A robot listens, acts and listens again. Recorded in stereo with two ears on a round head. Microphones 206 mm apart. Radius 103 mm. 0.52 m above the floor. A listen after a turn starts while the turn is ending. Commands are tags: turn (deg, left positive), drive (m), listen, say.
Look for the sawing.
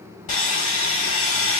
<turn deg="35"/>
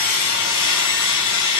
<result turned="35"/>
<turn deg="110"/>
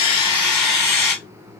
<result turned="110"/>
<say>Found it: sawing, straight ahead.</say>